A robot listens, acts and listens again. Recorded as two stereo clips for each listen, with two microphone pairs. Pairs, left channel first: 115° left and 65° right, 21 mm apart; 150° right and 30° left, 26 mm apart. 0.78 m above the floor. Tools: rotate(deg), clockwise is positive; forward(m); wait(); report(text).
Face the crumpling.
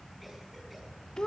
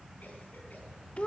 wait()
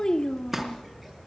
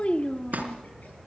rotate(-10)
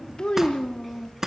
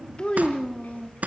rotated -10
report("Found it: crumpling, straight ahead, 2 to 4 m away.")